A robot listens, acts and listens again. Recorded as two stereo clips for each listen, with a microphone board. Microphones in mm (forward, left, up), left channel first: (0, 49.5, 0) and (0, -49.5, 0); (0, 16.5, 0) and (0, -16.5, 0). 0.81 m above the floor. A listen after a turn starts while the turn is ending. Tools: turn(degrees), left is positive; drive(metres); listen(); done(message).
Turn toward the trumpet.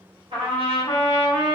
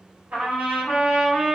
turn(degrees=-90)
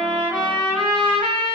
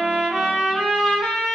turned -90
turn(degrees=15)
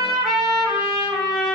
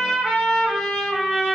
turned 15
done("Facing the trumpet, 1 to 2 m away.")